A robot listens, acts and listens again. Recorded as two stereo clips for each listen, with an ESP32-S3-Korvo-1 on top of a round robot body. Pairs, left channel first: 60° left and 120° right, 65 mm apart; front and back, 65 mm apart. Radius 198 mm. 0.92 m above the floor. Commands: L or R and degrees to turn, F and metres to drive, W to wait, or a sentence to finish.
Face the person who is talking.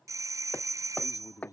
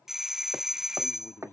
L50
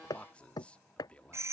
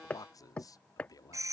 R10
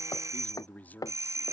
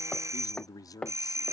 Found it: a man speaking, straight ahead.